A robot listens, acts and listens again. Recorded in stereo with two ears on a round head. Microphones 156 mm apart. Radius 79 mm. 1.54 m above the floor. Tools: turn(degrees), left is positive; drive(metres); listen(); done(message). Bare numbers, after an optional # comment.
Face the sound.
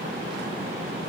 listen()
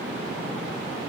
listen()
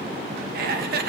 # The laughter: about 60° right or 120° right.
turn(-60)
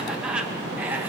# So it is at 10° right.
turn(-10)
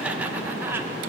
# The laughter is now 15° right.
turn(-15)
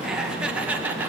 # The laughter is now 10° right.
turn(-10)
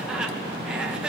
done("Found it: laughter, straight ahead, 2 to 4 m away.")